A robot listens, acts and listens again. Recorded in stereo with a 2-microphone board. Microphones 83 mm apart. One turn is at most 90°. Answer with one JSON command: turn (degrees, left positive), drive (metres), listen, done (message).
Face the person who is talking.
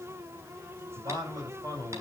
{"turn": -45}
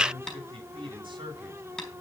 {"turn": -90}
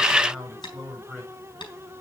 {"done": "Facing the man speaking."}